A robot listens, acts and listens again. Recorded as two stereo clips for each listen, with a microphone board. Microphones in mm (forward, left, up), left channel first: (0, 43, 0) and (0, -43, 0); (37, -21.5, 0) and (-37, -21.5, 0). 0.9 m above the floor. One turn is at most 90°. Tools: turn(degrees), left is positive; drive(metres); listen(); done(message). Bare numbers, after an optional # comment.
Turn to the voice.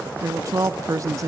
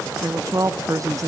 # The woman speaking: 140° right.
turn(-90)
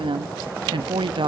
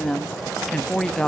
# The woman speaking is now 80° right.
turn(-80)
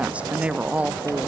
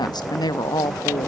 # The woman speaking is now 15° right.
turn(-15)
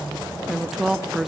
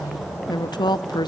done("Facing the woman speaking, under 1 m away.")